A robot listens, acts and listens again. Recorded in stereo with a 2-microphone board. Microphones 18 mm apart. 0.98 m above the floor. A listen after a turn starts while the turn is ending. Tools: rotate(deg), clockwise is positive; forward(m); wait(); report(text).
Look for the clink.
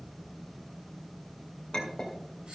rotate(-45)
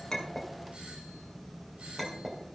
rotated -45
report("Found it: a clink, straight ahead, 2 to 4 m away.")